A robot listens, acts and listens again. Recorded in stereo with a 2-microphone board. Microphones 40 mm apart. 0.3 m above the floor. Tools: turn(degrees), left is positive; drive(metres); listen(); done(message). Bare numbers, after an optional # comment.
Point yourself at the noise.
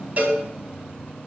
# The cowbell: about 45° right or 135° right.
turn(-45)
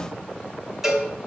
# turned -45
# So it is at 10° right.
turn(-10)
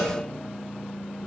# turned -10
listen()
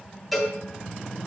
done("Facing the cowbell, 2 to 4 m away.")